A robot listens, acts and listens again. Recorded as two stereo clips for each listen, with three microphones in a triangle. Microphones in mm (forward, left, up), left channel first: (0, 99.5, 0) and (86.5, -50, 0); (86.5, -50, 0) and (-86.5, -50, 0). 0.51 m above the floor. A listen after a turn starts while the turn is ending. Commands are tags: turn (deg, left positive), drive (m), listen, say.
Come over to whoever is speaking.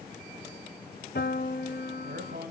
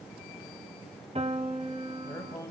<turn deg="-70"/>
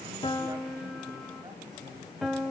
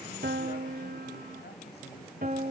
<listen/>
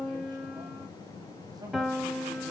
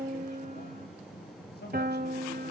<drive m="1.0"/>
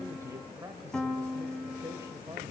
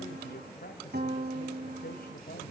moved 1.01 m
<turn deg="15"/>
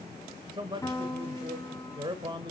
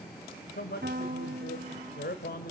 <drive m="1.0"/>
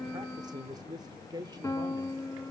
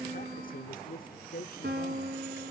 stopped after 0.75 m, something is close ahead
<say>I am next to the man speaking.</say>